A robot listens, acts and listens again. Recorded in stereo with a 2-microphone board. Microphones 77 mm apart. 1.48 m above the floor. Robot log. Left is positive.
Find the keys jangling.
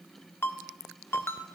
cmd idle
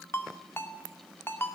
cmd idle
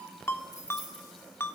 note: The keys jangling: about 55° left or 125° left.
cmd yaw +55
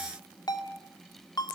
cmd idle
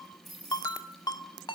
end: Facing the keys jangling.